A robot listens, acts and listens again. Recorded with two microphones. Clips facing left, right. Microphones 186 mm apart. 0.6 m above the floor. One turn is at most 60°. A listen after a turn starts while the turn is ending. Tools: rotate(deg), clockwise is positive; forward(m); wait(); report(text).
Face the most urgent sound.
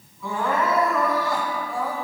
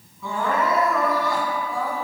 rotate(-30)
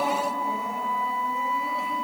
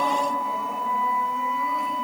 wait()
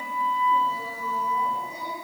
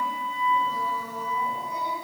wait()
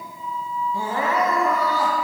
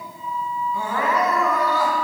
rotate(-60)
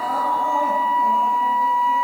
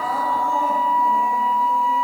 rotate(-60)
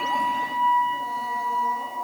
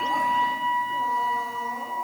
rotate(-45)
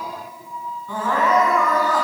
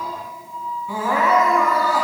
rotate(10)
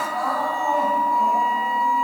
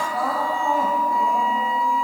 report("Found it: crying, straight ahead.")